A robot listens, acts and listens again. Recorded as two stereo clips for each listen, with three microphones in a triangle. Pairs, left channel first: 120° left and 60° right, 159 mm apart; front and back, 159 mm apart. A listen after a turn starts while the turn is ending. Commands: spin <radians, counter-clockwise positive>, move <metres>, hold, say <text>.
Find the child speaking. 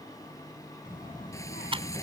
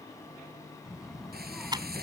spin 1.48
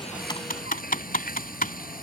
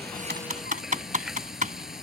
hold
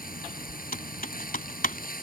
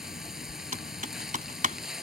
spin -0.70
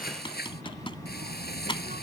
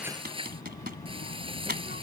spin -0.44
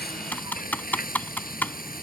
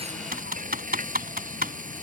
hold
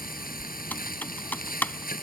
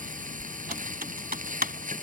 say Found it: a child speaking, straight ahead.